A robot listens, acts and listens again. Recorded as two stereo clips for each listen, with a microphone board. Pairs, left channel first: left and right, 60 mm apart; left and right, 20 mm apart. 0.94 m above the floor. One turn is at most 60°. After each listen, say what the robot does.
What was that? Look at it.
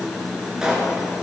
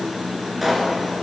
Turn 30° right.
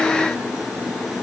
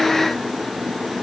Keep listening.
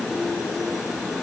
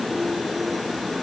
I heard a pop, but can't make it out now. It was about 20° left or 140° right.